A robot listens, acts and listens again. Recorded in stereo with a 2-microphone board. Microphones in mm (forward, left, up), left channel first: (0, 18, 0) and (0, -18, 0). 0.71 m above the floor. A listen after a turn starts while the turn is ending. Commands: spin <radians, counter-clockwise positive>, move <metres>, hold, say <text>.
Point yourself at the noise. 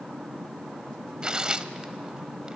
spin -0.44
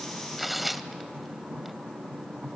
say Facing the tearing paper, under 1 m away.